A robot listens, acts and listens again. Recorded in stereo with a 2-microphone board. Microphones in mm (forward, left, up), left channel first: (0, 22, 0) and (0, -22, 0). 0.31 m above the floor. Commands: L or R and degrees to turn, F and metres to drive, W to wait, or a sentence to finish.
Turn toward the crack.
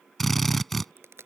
R90
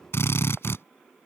I heard a crack from this way, but can't make it out now.